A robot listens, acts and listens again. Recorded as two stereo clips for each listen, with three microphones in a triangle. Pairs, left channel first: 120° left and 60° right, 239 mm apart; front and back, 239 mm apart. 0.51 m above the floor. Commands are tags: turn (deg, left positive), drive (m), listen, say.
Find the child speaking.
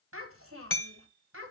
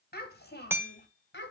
<turn deg="-35"/>
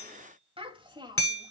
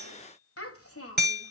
<turn deg="10"/>
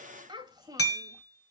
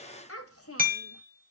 <turn deg="15"/>
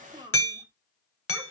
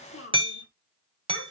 <turn deg="10"/>
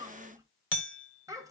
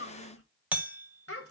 <turn deg="15"/>
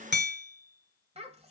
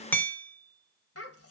<say>Facing the child speaking.</say>